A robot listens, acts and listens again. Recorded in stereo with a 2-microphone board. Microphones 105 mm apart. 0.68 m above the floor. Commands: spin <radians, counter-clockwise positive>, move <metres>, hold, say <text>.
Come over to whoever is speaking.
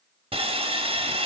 hold
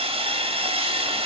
hold
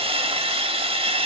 say I can't make out anyone speaking to turn to.